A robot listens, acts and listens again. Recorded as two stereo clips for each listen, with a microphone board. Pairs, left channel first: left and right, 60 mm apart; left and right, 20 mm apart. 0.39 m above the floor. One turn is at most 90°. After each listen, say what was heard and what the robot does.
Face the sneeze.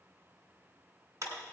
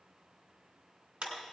Keep listening.
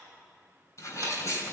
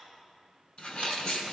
The sneeze: about 45° left or 135° left. Turn 45° left.
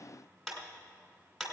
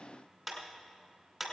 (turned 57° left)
Keep listening.
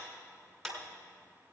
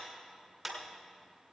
I heard a sneeze, but can't make it out now. It was about 10° right or 80° left.